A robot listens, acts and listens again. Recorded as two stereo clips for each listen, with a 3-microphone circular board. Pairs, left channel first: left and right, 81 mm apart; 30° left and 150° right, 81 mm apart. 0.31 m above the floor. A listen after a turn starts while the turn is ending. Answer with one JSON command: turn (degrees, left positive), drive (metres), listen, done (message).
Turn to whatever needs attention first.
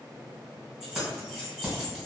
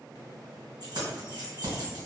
{"listen": true}
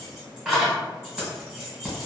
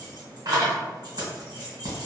{"listen": true}
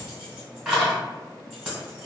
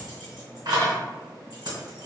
{"done": "I can't make out anything urgent to turn to."}